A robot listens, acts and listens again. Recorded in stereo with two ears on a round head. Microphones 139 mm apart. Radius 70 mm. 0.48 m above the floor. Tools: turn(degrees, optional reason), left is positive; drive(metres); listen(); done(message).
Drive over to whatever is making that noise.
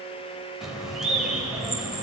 turn(degrees=-30)
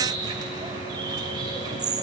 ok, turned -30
turn(degrees=-145, reason="So it is at 145° right.")
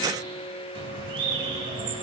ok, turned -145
turn(degrees=-40, reason="The bird is now 40° right.")
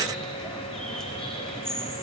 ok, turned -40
drive(metres=1.0)
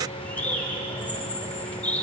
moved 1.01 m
turn(degrees=15, reason="The bird is now 15° left.")
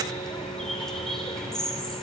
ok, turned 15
drive(metres=1.0)
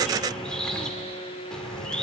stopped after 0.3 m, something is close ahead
turn(degrees=10, reason="The bird is now 10° left.")
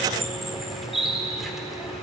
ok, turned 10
done("I am next to the bird.")